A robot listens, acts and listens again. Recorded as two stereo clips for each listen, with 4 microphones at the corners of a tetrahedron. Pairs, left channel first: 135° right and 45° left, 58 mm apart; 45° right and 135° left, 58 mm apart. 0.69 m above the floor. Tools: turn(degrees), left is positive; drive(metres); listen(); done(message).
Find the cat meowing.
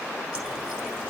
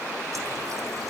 listen()
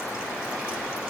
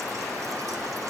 listen()
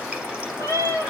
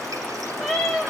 turn(degrees=35)
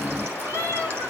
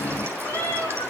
done("Found it: a cat meowing, straight ahead, over 4 m away.")